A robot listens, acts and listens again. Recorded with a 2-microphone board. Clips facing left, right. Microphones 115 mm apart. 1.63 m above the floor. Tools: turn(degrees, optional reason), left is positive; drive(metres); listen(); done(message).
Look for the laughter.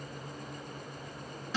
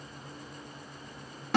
listen()
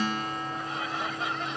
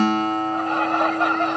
turn(degrees=-60, reason="The laughter: about 60° right or 120° right.")
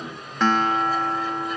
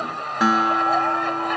turn(degrees=-65, reason="So it is at 65° right.")
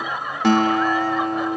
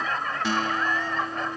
turn(degrees=10, reason="The laughter is now 10° left.")
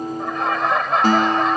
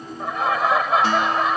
done("Facing the laughter.")